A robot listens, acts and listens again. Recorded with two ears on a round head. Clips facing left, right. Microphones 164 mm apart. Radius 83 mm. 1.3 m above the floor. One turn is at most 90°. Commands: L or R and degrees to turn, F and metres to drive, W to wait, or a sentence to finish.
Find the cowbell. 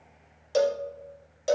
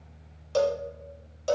L30
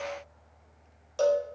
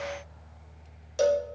R15
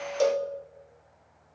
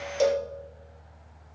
Found it: a cowbell, straight ahead, under 1 m away.